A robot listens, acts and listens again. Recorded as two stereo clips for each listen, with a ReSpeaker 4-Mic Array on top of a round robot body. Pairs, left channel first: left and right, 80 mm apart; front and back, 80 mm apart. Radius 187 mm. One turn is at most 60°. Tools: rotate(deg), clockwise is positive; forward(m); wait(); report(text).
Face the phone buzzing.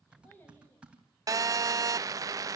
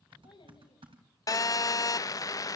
rotate(45)
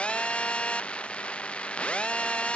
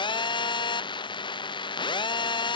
rotate(-15)
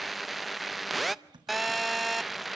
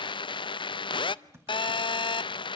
report("Facing the phone buzzing.")